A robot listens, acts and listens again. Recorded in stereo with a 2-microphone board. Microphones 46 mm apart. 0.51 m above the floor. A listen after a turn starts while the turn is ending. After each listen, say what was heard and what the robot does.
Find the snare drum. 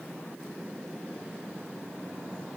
Keep listening.
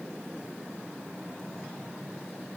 Keep listening.
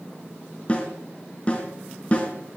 The snare drum: about 30° left or 150° left. Turn 30° left.
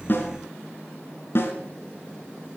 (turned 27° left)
So it is at 120° left. Turn 120° left.
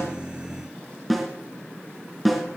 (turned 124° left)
Found it: a snare drum, straight ahead, over 4 m away.